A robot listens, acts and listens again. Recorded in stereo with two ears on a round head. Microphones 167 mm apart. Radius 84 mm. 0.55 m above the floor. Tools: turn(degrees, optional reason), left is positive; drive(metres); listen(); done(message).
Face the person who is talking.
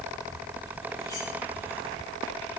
listen()
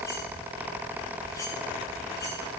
listen()
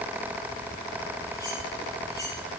done("I can't make out anyone speaking.")